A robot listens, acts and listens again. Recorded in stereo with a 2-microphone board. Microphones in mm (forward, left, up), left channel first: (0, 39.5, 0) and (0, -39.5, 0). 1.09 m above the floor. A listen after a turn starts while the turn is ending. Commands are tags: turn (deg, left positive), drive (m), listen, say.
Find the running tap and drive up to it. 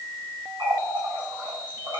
<turn deg="-90"/>
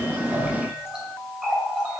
<turn deg="-10"/>
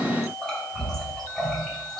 <drive m="1.0"/>
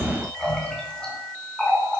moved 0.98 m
<turn deg="10"/>
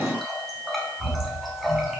<drive m="1.0"/>
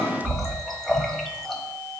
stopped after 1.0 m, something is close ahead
<say>Arrived at the running tap, straight ahead.</say>